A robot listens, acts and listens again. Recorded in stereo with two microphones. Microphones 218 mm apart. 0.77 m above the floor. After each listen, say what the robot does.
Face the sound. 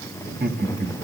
Turn 50° right.
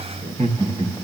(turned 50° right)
Turn 25° right.
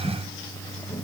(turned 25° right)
Facing the laughter.